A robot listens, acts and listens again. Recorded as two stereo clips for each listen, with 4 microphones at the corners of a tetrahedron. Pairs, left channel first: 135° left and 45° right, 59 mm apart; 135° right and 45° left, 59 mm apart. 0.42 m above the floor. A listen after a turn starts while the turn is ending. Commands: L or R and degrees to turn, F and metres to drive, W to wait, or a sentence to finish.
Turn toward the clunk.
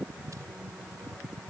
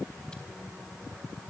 W
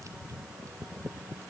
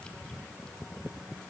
W
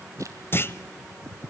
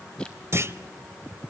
L85
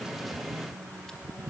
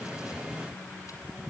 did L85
Facing where the clunk came from. I can't hear it now.